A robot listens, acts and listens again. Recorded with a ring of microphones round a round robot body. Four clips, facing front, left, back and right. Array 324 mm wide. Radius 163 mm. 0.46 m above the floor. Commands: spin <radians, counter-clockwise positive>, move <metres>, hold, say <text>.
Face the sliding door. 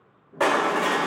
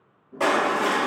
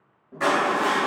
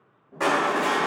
spin -2.71
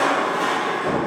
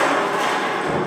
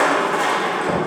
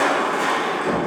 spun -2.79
hold
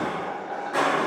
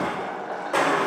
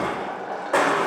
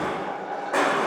hold
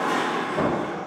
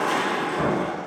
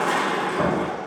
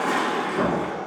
say Found it: a sliding door, straight ahead, 1 to 2 m away.